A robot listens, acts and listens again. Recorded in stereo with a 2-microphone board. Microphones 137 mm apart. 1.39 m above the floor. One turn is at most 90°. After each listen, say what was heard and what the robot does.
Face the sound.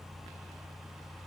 Keep listening.
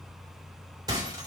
The breaking glass: about 30° right or 150° right. Turn 30° right.
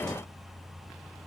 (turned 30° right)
Keep listening.
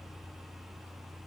I heard breaking glass, but can't make it out now. It was about straight ahead or 120° right.